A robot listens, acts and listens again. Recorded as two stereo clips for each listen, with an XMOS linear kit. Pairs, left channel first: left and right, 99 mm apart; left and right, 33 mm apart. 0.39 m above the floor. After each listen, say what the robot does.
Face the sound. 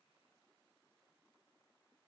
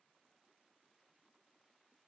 Keep listening.
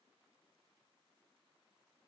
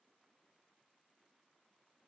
Keep listening.
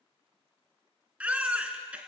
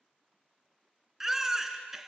Turn 30° right.
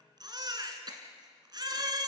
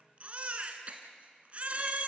Turn 140° right.
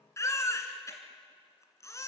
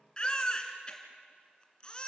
Turn 30° left.
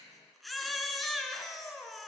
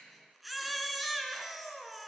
Facing the baby crying.